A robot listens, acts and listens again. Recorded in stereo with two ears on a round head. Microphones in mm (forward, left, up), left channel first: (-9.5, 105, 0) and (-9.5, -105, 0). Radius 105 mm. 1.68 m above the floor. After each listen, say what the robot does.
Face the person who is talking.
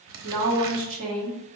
Turn 60° right.
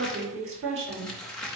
Turn 55° right.
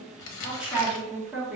Facing the woman speaking, 2 to 4 m away.